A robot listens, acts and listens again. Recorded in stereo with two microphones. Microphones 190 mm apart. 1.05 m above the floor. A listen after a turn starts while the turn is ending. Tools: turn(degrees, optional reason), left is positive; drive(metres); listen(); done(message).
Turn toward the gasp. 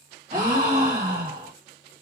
turn(degrees=-45, reason="The gasp: about 45° right or 135° right.")
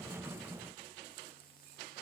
listen()
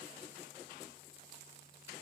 done("I heard a gasp, but can't make it out now. It was about straight ahead or 90° right.")